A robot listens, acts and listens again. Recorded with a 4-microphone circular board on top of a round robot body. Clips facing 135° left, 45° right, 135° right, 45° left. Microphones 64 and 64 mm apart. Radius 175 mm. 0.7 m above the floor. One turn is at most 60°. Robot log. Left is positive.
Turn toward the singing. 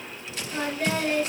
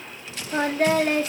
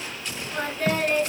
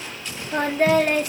note: The singing: 10° left.
cmd yaw +10
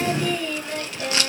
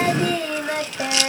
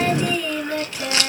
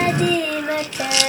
note: The singing is now 10° left.
cmd yaw +10
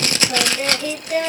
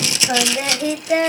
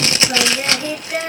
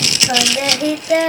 note: The singing is now 15° left.
cmd yaw +15
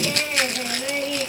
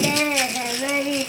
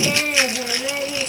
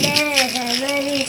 note: The singing is now 15° left.
cmd yaw +15
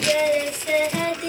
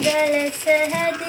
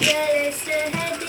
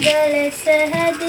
note: The singing is now 10° left.
cmd yaw +10
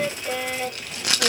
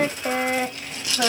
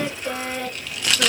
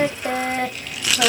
end: Found it: singing, straight ahead, 2 to 4 m away.